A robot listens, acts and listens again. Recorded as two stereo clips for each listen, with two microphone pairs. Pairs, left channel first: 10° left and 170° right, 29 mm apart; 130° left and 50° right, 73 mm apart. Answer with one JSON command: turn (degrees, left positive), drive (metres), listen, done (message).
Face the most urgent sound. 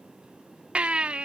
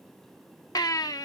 {"turn": 150}
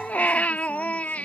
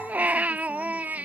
{"turn": 15}
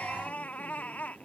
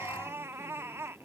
{"done": "Facing the baby crying."}